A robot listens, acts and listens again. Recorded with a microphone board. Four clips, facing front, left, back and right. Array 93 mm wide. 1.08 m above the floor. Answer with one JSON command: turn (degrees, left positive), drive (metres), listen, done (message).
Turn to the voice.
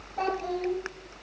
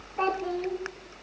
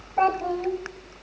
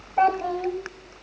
{"turn": -120}
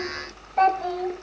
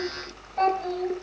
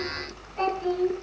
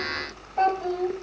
{"turn": -10}
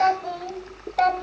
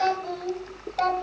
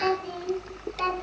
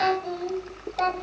{"done": "Found it: a child speaking, straight ahead."}